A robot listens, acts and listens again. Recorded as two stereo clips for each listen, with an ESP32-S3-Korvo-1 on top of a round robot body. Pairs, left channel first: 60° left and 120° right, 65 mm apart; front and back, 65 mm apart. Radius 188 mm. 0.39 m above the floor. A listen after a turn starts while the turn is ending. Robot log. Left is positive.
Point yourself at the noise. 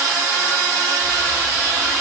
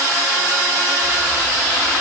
cmd idle
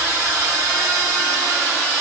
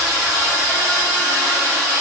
cmd idle
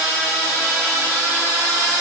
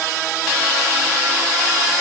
end: I can't make out anything to turn to.